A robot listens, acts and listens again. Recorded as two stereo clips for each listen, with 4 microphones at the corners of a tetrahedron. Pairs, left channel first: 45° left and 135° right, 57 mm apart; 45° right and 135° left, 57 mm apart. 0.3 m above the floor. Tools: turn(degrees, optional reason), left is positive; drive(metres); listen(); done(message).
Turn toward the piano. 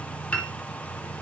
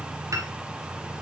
turn(degrees=115, reason="The piano: 115° left.")
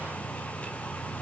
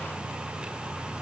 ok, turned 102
turn(degrees=10, reason="Nothing new. It was at 10° left.")
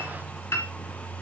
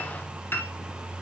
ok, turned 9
done("Found it: a piano, straight ahead.")